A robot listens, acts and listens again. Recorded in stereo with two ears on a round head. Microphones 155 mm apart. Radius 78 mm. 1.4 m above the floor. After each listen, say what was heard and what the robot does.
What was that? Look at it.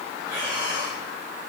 The breathing: about 20° right or 160° right. Turn 20° right.
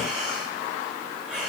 Found it: breathing, straight ahead.